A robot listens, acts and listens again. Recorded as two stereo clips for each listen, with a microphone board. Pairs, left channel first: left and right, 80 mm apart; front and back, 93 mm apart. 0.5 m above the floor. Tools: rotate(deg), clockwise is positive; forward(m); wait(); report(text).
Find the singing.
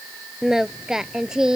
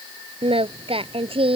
rotate(170)
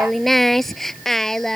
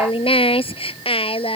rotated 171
report("Facing the singing.")